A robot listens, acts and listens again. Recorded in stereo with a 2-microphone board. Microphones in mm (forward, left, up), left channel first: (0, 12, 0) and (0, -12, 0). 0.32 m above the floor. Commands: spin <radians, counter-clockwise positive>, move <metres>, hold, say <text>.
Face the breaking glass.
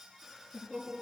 hold
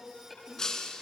spin 0.44
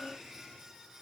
hold
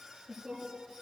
say I heard breaking glass, but can't make it out now. It was about straight ahead or 130° left.